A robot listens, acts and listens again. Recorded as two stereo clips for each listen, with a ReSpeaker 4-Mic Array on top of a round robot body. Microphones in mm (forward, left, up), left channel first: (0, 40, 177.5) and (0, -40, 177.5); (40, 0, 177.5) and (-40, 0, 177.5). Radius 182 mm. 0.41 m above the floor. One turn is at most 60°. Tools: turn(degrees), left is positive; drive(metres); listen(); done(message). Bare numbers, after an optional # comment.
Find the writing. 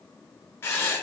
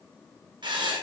# The writing: 150° left.
turn(60)
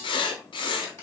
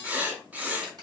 # The writing is now 105° left.
turn(60)
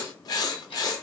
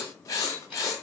# The writing is now 50° left.
turn(50)
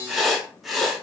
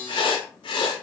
done("Facing the writing, under 1 m away.")